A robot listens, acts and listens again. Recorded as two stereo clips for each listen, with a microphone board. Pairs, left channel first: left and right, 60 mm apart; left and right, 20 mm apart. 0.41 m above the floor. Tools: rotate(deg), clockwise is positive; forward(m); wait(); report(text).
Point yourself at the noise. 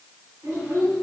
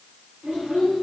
rotate(60)
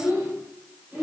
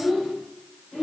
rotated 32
rotate(25)
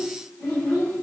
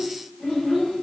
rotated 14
report("Facing the child speaking, 1 to 2 m away.")